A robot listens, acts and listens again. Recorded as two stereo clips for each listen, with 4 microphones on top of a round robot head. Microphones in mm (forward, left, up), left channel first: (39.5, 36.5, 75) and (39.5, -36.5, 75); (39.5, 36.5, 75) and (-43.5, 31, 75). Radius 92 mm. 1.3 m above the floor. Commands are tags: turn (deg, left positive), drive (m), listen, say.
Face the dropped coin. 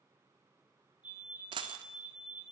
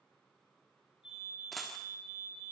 <turn deg="-85"/>
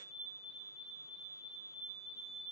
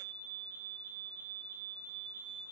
<say>Facing where the dropped coin came from. I can't hear it now.</say>